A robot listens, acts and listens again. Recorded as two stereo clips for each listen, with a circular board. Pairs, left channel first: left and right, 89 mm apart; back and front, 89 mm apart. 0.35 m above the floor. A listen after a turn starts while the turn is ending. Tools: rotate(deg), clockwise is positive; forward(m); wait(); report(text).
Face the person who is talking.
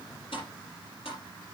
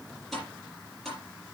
wait()
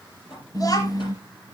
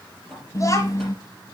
rotate(-130)
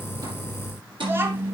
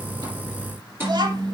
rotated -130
rotate(30)
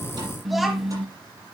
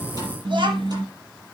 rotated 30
report("Found it: a child speaking, straight ahead.")